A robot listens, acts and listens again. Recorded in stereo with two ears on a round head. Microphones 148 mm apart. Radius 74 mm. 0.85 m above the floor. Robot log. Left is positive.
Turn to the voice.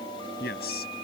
note: The man speaking: about 65° left or 115° left.
cmd yaw +65
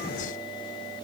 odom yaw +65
cmd idle
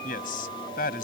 note: So it is at 55° left.
cmd yaw +55
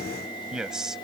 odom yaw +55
end: Facing the man speaking.